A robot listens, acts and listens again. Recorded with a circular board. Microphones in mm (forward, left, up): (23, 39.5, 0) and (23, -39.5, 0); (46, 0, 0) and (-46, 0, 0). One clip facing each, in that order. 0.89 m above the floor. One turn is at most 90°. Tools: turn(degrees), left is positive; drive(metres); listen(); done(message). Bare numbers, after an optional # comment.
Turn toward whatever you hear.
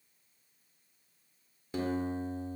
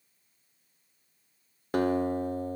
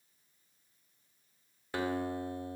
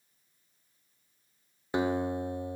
# The guitar: 110° right.
turn(-90)
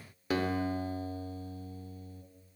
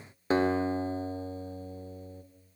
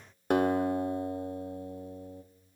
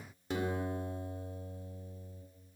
# The guitar is now 30° right.
turn(-30)
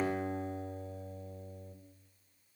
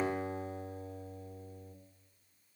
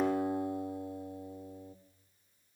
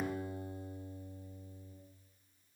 done("Found it: a guitar, straight ahead, 2 to 4 m away.")